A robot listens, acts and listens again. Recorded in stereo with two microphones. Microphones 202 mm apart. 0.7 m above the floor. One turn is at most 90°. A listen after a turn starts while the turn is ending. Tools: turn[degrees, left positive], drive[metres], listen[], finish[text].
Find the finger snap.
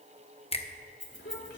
Thought: The finger snap: about 30° left or 150° left.
Action: turn[30]
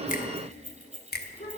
Thought: So it is at 115° left.
Action: turn[90]
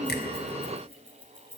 Thought: Nothing new. It was at 25° left.
Action: turn[25]
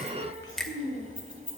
Action: finish[Found it: a finger snap, straight ahead.]